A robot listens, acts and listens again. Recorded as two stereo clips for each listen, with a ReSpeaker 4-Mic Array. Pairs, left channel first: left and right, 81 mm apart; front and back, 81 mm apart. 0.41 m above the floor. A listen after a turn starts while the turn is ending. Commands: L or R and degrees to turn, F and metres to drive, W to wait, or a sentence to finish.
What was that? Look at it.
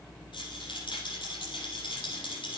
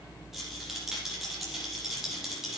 L95
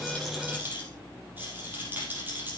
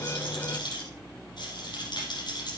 R20
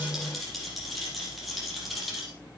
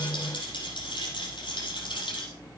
Facing the rattle.